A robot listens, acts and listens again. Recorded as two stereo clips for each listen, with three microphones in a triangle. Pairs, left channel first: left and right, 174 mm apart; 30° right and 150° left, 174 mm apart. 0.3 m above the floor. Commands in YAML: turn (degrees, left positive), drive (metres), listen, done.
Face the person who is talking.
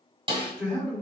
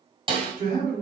turn: 170
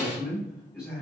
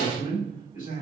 done: "Found it: a man speaking, straight ahead, 1 to 2 m away."